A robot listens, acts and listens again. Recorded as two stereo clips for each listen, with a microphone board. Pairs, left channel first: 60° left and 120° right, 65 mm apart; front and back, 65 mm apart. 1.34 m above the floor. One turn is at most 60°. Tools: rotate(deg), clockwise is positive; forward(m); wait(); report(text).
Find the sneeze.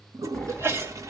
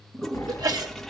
rotate(60)
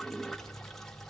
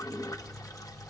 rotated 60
rotate(60)
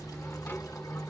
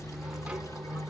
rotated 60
rotate(50)
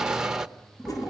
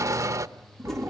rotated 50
report("Facing where the sneeze came from. I can't hear it now.")